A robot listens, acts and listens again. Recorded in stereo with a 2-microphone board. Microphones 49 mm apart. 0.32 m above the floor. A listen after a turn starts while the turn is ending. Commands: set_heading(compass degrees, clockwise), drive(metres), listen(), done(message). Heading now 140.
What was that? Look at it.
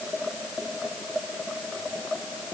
listen()
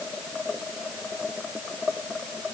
listen()
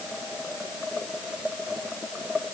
done("I can't make out anything.")